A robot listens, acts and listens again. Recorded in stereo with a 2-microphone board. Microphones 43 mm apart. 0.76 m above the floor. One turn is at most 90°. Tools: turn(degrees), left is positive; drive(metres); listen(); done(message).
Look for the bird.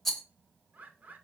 turn(degrees=-40)
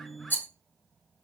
listen()
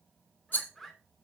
done("Found it: a bird, straight ahead.")